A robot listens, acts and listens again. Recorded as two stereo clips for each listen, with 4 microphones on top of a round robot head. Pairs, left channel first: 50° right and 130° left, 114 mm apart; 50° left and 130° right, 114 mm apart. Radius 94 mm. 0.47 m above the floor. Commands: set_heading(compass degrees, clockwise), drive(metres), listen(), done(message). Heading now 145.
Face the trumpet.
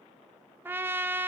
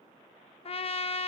set_heading(85)
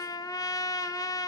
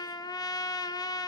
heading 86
done("Found it: a trumpet, straight ahead.")